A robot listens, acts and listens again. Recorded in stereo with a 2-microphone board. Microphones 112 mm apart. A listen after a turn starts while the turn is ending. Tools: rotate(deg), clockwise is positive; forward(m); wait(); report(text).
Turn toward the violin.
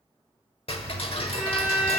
rotate(30)
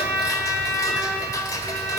rotate(140)
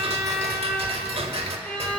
rotate(-10)
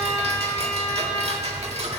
report("Facing the violin.")